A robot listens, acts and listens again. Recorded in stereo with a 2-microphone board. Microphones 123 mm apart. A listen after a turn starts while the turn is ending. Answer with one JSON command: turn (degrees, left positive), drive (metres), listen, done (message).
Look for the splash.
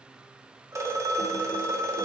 {"listen": true}
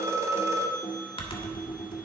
{"listen": true}
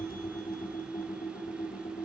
{"done": "I can't make out a splash, only a phone ringing and typing on a keyboard."}